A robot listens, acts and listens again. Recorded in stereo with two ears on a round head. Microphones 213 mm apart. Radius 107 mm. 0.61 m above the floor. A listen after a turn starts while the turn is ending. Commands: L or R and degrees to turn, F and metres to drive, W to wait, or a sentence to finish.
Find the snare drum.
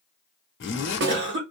R45
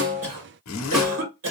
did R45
Found it: a snare drum, straight ahead.